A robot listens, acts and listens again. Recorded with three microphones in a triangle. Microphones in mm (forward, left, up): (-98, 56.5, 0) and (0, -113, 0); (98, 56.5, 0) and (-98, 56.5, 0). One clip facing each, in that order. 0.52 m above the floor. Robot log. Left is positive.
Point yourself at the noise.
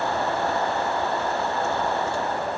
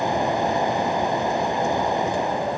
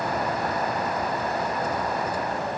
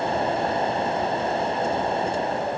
cmd idle
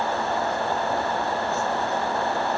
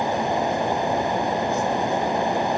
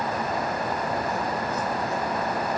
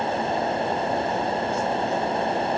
cmd idle
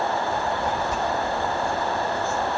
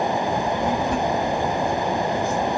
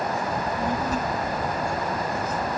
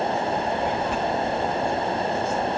note: The child speaking: 45° right.
cmd yaw -45
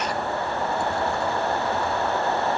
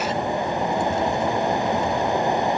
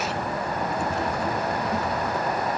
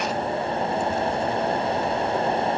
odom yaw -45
cmd idle
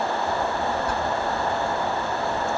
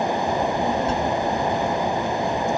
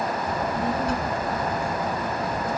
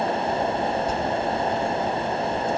end: Facing the child speaking.